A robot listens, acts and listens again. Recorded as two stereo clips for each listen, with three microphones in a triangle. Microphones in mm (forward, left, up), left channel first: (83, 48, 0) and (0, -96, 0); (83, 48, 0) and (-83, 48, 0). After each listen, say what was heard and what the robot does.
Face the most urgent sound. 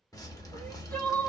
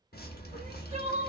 The crying: 135° left. Turn 135° left.
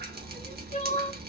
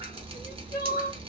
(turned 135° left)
The crying is now 20° left. Turn 20° left.
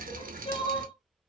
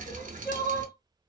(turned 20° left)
Found it: crying, straight ahead, 1 to 2 m away.